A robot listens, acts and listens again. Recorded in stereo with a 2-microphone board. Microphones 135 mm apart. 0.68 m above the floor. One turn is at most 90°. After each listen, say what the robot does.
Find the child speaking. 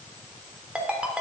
Keep listening.
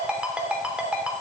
Keep listening.
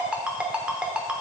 I can't make out a child speaking, only a ringtone.